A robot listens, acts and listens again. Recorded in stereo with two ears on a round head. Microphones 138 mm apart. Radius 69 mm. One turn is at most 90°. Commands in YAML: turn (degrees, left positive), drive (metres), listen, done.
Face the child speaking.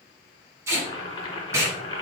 listen: true
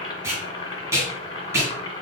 listen: true
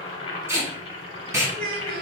turn: -65
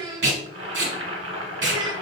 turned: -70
turn: -30
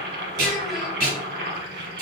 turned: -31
listen: true
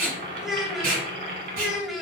done: "Facing the child speaking, 1 to 2 m away."